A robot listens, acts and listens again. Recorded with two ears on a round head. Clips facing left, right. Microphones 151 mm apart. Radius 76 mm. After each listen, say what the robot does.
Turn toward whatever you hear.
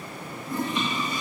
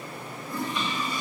Turn 20° left.
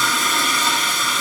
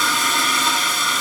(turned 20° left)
Facing the toilet flushing, under 1 m away.